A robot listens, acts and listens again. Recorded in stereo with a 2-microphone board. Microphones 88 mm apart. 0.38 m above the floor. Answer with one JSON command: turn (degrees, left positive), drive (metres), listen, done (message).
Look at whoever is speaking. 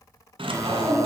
{"turn": -15}
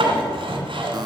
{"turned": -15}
{"listen": true}
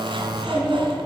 {"done": "Facing the child speaking."}